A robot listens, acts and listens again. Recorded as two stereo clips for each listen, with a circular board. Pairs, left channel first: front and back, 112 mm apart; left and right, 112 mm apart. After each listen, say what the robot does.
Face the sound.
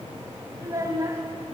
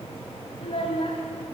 Turn 120° left.
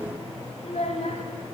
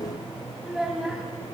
Facing the child speaking.